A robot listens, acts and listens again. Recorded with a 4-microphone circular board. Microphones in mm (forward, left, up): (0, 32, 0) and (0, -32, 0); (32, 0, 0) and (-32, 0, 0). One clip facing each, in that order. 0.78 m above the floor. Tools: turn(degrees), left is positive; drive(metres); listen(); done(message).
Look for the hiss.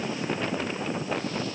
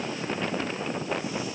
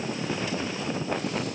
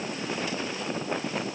listen()
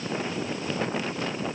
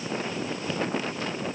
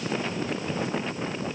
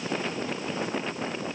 listen()
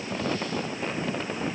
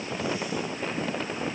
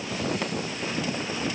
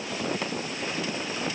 done("I can't make out a hiss to turn to.")